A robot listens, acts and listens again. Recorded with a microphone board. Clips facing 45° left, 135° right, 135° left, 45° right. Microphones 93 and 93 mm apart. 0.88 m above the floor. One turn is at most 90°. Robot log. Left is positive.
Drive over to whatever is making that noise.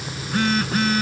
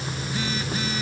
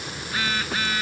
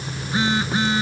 note: The phone buzzing: 20° left.
cmd yaw +20
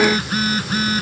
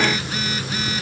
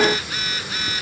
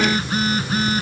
cmd fwd 1.0
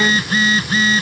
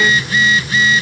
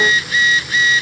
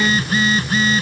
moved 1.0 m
cmd fwd 1.0
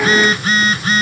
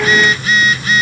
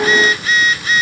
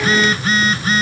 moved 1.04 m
cmd fwd 1.0
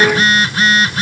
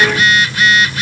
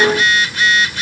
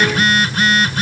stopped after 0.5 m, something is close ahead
end: I am next to the phone buzzing.